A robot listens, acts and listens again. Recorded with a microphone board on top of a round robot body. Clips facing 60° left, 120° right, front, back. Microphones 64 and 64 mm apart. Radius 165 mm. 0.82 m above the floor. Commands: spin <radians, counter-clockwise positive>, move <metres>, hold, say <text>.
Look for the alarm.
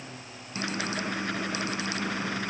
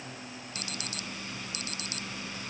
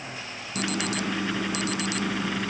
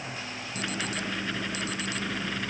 say Found it: an alarm, straight ahead.